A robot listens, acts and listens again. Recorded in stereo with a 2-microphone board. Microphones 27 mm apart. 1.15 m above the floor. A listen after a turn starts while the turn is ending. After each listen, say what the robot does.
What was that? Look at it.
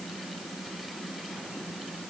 Keep listening.
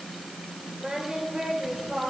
Turn 30° right.
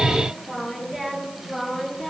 Facing the singing.